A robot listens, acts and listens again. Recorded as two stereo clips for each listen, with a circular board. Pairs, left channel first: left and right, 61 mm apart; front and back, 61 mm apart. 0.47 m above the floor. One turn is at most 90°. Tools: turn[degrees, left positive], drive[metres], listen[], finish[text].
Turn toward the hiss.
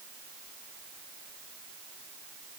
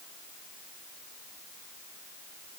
Action: listen[]
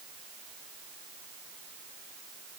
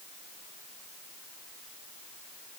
Action: listen[]
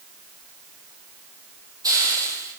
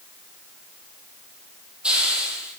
Thought: The hiss: 105° right.
Action: turn[-90]
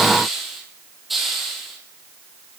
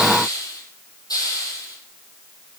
Action: finish[Facing the hiss, 2 to 4 m away.]